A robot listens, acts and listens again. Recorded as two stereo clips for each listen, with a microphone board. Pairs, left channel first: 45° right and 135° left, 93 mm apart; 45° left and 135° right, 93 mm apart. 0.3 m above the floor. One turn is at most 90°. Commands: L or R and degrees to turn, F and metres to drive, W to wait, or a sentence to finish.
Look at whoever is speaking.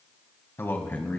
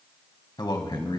L25
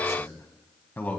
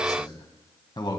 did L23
L25
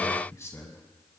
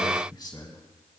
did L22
L15
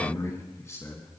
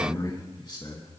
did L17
L15
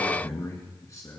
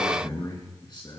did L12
L10
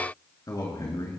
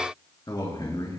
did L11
Found it: a man speaking, straight ahead.